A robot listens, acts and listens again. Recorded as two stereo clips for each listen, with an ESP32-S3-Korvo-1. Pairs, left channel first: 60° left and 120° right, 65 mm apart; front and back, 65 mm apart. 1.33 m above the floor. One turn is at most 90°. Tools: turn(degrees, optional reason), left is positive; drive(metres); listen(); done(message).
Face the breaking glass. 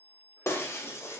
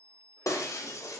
turn(degrees=20, reason="The breaking glass: 20° left.")
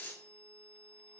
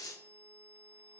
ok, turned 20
done("Found it: breaking glass, straight ahead, under 1 m away.")